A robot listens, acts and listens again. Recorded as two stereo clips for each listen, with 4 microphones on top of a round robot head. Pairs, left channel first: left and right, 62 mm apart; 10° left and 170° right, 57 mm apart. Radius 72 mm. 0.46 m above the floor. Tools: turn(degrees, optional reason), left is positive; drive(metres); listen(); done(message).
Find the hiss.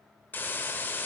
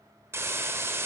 turn(degrees=150, reason="The hiss: 150° left.")
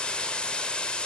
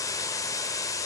turn(degrees=20, reason="The hiss is now 20° left.")
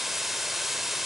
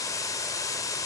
done("Facing the hiss.")